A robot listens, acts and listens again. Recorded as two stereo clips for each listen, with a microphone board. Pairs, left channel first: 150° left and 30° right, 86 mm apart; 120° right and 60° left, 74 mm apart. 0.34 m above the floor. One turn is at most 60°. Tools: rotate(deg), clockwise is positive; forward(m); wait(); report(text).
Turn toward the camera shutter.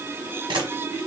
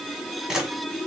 rotate(20)
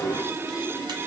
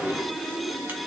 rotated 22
wait()
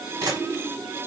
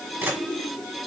report("Facing the camera shutter, 1 to 2 m away.")